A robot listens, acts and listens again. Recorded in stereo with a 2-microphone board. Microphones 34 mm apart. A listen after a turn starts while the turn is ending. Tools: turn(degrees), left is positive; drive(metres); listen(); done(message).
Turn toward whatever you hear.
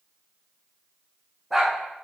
turn(degrees=30)
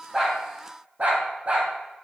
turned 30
turn(degrees=-45)
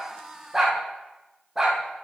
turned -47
turn(degrees=-15)
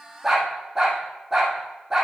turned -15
turn(degrees=-10)
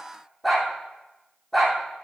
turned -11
done("Found it: a dog barking, straight ahead.")